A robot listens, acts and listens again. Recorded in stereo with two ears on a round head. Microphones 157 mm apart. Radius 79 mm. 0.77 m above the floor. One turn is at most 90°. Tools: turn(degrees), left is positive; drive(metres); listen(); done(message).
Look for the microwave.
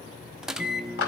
turn(degrees=-30)
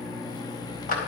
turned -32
turn(degrees=25)
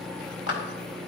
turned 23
done("Found it: a microwave, straight ahead, under 1 m away.")